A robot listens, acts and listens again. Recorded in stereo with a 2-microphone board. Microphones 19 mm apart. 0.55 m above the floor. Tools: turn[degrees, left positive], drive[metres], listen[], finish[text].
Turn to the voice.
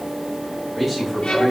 Action: turn[30]
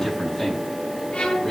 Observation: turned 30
Thought: So it is at 150° left.
Action: turn[150]
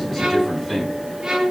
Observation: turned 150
Action: finish[Facing the man speaking.]